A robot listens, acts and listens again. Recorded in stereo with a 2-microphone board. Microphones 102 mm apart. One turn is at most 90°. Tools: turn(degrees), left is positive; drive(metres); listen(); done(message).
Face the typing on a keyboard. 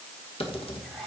turn(degrees=70)
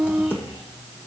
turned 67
turn(degrees=25)
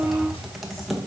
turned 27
done("Found it: typing on a keyboard, straight ahead, 1 to 2 m away.")